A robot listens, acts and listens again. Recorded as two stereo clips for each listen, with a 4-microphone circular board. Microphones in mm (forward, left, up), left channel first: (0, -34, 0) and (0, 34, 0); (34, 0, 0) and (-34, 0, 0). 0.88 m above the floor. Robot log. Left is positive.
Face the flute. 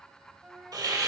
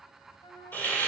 note: The flute: 10° left.
cmd yaw +10
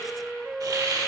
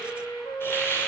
end: Facing the flute, under 1 m away.